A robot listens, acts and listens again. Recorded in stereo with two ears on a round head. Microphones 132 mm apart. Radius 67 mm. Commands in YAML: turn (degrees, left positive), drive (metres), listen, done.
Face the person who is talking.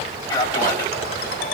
turn: 25
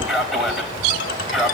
done: "Facing the man speaking, 2 to 4 m away."